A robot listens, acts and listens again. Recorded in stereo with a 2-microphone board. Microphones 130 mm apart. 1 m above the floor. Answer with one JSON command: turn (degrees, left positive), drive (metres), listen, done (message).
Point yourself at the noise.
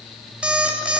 {"turn": -30}
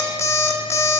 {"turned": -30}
{"turn": 25}
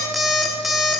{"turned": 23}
{"done": "Facing the alarm clock, under 1 m away."}